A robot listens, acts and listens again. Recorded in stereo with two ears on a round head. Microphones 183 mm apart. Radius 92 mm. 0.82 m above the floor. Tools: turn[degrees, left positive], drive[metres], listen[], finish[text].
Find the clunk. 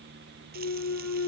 Thought: The clunk: about 75° left or 105° left.
Action: turn[75]
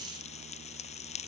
Action: listen[]
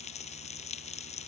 Action: finish[I heard a clunk, but can't make it out now. It was about straight ahead or 30° left.]